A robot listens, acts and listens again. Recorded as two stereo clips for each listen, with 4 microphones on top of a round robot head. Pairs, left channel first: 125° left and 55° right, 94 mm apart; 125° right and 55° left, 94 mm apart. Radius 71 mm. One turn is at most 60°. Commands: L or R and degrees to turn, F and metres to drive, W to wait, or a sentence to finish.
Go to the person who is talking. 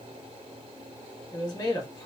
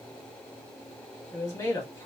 L60
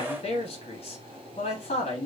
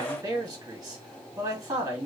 L60
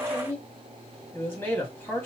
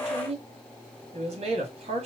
L60
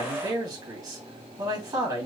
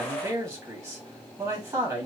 F1.0
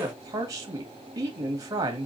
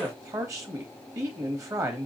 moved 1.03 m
F1.0
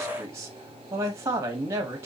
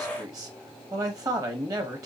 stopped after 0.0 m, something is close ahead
Arrived at the man speaking, straight ahead.